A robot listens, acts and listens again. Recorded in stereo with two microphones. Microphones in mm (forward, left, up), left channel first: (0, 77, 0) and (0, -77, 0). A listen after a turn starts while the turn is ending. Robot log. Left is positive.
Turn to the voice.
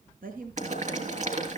note: The woman speaking: about 70° right or 110° right.
cmd yaw -70
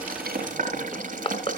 cmd idle
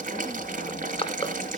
cmd idle
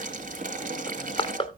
end: I heard a woman speaking, but can't make it out now. It was about straight ahead or 40° right.